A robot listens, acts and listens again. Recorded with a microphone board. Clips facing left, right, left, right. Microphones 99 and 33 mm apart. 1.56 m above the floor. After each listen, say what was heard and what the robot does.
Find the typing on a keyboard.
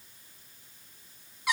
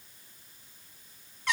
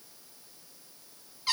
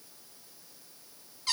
Keep listening.
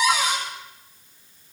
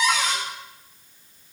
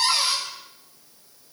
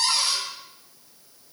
Keep listening.
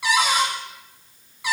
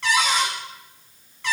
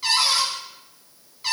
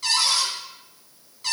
I can't make out typing on a keyboard to turn to.